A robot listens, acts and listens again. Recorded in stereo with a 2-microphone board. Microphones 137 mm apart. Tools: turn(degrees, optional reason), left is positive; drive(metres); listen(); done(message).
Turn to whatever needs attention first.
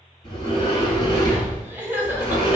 turn(degrees=-30)
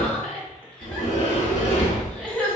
turn(degrees=15, reason="So it is at 15° left.")
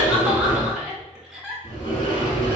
done("Found it: crying, straight ahead.")